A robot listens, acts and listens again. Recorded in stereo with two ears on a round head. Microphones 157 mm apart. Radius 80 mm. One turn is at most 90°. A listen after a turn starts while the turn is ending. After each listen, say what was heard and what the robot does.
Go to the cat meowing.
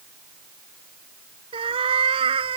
The cat meowing: about 30° right or 150° right. Turn 30° right.
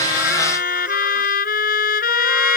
Keep listening.
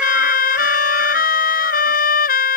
Keep listening.
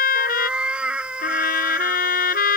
Drive 1.0 m forward.
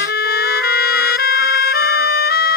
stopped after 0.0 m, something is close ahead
Keep listening.
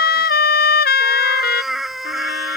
Blocked. The cat meowing is further on, straight ahead.